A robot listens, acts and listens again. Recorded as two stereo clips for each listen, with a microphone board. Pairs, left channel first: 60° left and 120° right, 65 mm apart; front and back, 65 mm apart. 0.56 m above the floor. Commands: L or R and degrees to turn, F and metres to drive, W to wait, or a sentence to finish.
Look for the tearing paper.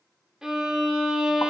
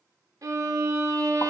W
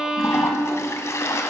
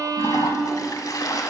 W
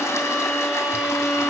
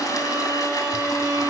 I can't make out tearing paper, only a violin and a toilet flushing.